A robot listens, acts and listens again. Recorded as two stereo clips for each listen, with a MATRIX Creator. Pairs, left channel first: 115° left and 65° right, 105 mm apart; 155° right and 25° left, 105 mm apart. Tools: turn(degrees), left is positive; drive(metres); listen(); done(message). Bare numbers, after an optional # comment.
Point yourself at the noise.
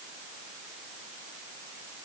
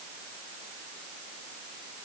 listen()
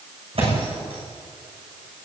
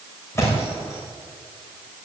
# The thud: 95° right.
turn(-95)
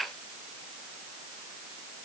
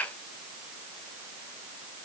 done("Facing where the thud came from. I can't hear it now.")